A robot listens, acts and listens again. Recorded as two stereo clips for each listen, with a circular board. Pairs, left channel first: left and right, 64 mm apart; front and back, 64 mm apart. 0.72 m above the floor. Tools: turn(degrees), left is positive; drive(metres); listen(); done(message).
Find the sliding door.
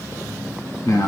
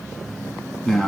listen()
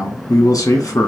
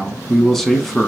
listen()
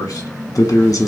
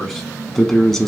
done("I can't make out a sliding door, only a man speaking.")